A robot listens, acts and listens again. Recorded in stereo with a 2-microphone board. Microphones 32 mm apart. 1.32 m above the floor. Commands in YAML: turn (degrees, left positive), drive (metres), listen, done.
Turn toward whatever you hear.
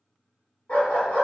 turn: 45
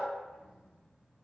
listen: true
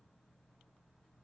listen: true
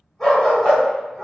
turn: 10
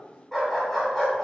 done: "Facing the dog barking, 1 to 2 m away."